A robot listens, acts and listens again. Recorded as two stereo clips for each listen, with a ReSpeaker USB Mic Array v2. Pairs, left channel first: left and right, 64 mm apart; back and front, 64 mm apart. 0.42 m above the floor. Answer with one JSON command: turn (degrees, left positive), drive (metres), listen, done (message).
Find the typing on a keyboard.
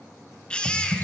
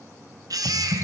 {"turn": -60}
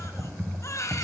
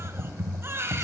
{"turn": -25}
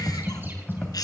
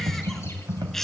{"turn": 20}
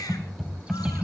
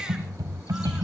{"done": "Found it: typing on a keyboard, straight ahead, 2 to 4 m away."}